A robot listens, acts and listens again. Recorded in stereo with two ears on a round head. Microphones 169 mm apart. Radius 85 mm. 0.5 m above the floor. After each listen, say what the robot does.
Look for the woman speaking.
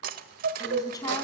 Turn 20° left.
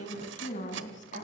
Turn 135° left.
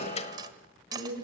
Turn 55° left.
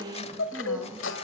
Facing the woman speaking, 2 to 4 m away.